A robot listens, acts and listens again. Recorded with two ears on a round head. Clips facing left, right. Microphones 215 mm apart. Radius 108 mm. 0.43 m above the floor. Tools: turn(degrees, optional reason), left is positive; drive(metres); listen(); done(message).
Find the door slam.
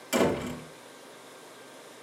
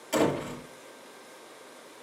turn(degrees=20, reason="The door slam: about 20° left or 160° left.")
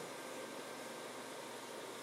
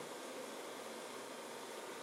listen()
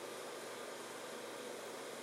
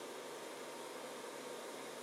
done("I heard a door slam, but can't make it out now. It was about straight ahead or 140° left.")